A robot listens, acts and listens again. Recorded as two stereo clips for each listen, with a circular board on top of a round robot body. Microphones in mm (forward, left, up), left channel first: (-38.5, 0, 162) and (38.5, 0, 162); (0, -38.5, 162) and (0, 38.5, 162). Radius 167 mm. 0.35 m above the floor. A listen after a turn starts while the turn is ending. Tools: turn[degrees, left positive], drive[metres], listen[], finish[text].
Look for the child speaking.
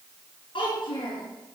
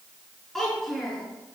Thought: The child speaking: 175° right.
Action: turn[-175]
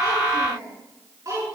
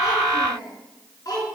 Thought: The child speaking is now 50° right.
Action: turn[-50]
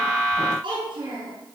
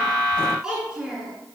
Thought: The child speaking is now 10° left.
Action: turn[10]
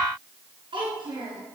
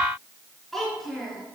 Action: finish[Found it: a child speaking, straight ahead.]